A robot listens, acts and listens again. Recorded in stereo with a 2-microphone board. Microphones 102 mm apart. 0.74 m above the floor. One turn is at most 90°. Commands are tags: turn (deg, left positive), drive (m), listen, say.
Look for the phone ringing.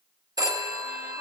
<turn deg="-35"/>
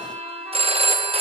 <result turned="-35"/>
<turn deg="-90"/>
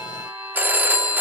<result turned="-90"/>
<turn deg="-20"/>
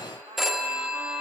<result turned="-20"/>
<say>Found it: a phone ringing, straight ahead, under 1 m away.</say>